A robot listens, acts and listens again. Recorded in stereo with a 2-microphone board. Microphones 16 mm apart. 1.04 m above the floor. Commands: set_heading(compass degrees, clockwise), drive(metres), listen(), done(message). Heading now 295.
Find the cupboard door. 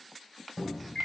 set_heading(275)
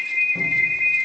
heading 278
listen()
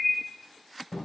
set_heading(133)
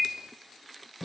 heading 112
set_heading(132)
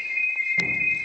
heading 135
listen()
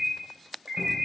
listen()
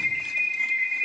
done("Facing where the cupboard door came from. I can't hear it now.")